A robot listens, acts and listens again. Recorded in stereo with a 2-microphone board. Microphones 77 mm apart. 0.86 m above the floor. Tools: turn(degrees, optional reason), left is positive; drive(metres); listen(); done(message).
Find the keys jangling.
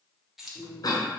turn(degrees=-30)
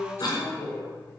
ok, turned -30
listen()
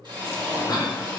listen()
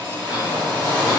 done("I heard keys jangling, but can't make it out now. It was about 25° left or 145° right.")